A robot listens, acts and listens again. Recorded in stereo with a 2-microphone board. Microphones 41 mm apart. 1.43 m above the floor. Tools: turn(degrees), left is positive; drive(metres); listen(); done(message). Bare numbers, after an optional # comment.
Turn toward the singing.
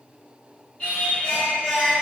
# The singing: about 30° left or 150° left.
turn(30)
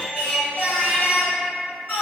# So it is at 115° left.
turn(115)
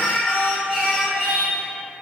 # The singing is now 10° left.
turn(10)
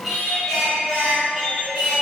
done("Facing the singing.")